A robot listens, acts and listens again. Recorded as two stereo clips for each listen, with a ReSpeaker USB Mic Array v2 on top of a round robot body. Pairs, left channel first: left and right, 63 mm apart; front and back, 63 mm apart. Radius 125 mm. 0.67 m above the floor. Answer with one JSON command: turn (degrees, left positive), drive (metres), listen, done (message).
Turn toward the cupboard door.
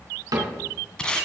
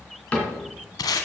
{"turn": -70}
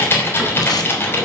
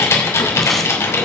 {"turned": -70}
{"listen": true}
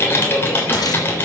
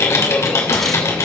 {"listen": true}
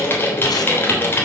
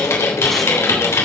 {"done": "Facing where the cupboard door came from. I can't hear it now."}